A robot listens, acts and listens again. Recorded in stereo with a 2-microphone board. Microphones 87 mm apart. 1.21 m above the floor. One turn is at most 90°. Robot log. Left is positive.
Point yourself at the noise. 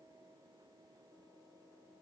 cmd idle
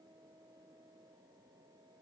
cmd idle
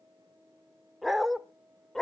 cmd yaw +30
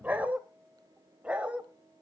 note: So it is at 15° right.
cmd yaw -15
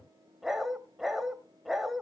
end: Facing the dog barking, 2 to 4 m away.